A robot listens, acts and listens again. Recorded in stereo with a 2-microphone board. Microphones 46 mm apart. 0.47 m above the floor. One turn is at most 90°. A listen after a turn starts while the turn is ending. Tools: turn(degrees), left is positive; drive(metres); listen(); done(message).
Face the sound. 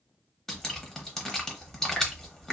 turn(degrees=30)
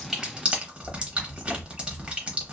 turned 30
turn(degrees=-25)
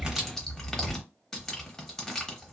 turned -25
turn(degrees=10)
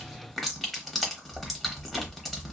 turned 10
done("Found it: dripping, straight ahead, under 1 m away.")